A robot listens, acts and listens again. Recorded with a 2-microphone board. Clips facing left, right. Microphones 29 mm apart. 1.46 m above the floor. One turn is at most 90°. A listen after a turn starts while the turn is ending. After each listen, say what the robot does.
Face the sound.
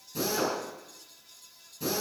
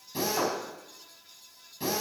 Turn 45° right.
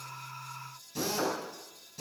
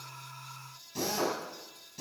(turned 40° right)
Facing the drill.